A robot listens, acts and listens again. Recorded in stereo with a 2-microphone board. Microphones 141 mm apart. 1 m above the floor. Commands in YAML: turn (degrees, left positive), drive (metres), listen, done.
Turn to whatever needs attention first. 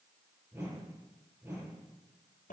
listen: true
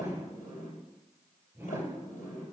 listen: true
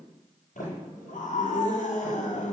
turn: 70
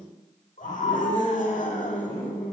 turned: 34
turn: 75
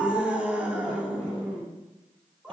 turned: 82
turn: -10
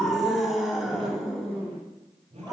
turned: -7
done: "Found it: a scream, straight ahead."